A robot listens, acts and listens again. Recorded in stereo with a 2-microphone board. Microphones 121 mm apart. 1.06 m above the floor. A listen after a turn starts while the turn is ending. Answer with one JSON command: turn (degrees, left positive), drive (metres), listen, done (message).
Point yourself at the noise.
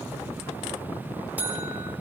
{"turn": -30}
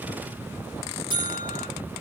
{"turn": -140}
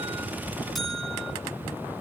{"done": "Facing the buzzer, 2 to 4 m away."}